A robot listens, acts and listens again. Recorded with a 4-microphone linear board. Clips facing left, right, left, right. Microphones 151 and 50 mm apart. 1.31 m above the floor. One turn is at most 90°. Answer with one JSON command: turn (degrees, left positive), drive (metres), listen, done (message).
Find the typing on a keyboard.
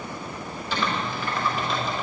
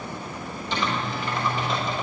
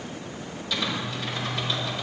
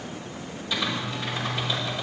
{"turn": -20}
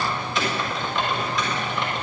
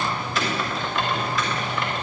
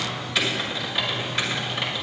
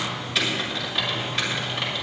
{"done": "Facing the typing on a keyboard, over 4 m away."}